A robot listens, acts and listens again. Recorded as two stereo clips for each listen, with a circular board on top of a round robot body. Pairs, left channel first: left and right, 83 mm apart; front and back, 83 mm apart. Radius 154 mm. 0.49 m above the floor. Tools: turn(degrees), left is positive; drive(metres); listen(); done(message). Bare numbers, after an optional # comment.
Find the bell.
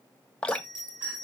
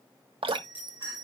# The bell: 65° right.
turn(-65)
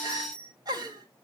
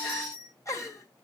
# The bell is now 15° left.
turn(15)
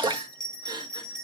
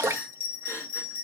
done("Facing the bell.")